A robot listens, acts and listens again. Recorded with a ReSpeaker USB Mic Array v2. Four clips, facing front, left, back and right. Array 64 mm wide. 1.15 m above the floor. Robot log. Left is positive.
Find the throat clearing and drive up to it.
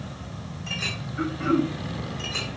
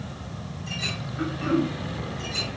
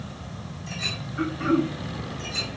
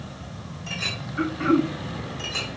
note: The throat clearing: 90° right.
cmd yaw -90
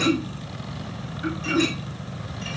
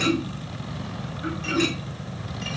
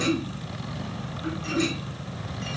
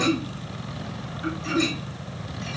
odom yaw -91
cmd fwd 1.0
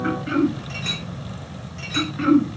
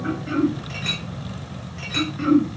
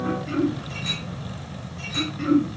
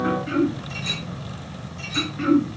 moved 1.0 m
cmd fwd 1.0
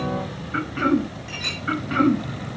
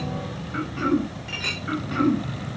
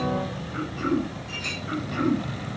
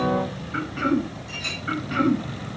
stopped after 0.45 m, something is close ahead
note: The throat clearing is now 10° right.
cmd yaw -10
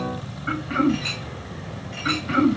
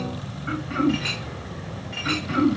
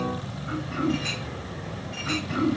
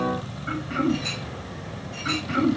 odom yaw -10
end: Arrived at the throat clearing, straight ahead.